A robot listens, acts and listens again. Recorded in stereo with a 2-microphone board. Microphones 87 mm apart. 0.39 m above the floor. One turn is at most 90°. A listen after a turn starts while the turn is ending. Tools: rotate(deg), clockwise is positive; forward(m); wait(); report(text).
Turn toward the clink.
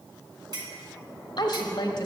rotate(50)
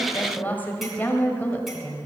wait()
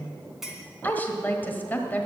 report("Found it: a clink, straight ahead, 2 to 4 m away.")